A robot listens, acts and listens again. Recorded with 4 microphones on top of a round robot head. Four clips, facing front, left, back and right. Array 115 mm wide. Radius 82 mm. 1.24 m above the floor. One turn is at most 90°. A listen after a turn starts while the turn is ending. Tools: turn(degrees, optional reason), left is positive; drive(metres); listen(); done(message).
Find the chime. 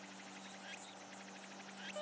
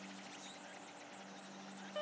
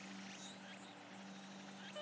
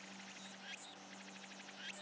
listen()
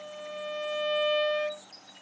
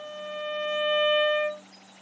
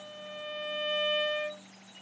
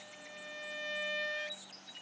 turn(degrees=-65, reason="The chime: 65° right.")
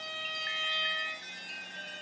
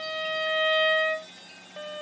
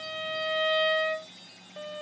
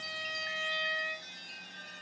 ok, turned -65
done("Facing the chime.")